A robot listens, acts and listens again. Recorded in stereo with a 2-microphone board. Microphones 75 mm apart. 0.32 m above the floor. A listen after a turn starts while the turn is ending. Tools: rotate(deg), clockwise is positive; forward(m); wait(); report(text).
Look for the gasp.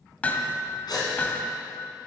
rotate(-70)
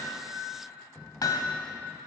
wait()
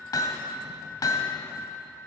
report("I heard a gasp, but can't make it out now. It was about straight ahead or 40° left.")